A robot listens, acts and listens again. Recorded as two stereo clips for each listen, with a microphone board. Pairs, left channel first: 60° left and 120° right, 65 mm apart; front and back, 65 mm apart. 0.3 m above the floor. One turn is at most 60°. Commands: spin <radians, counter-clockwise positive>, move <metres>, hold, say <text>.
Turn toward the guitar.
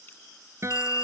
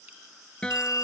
spin -1.05
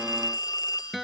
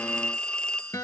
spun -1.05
spin -0.52
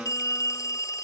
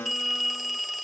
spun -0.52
hold
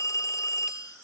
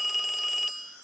hold
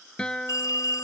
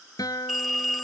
spin -0.26
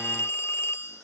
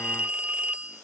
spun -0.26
hold
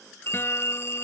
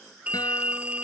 hold
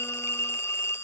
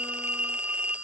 say Facing where the guitar came from. I can't hear it now.